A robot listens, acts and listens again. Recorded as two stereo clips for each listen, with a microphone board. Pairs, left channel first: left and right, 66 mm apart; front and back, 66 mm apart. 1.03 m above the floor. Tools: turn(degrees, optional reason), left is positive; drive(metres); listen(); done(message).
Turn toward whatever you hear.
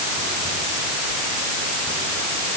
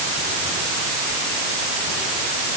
listen()
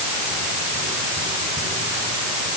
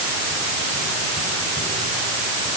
listen()
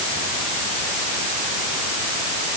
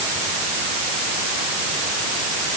done("I can't make out anything to turn to.")